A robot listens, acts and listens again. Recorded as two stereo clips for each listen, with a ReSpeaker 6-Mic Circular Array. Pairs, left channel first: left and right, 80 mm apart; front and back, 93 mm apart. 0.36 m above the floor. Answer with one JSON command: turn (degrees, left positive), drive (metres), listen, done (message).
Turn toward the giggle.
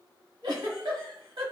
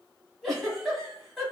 {"turn": -90}
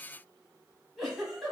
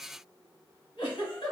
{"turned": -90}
{"done": "Found it: a giggle, straight ahead."}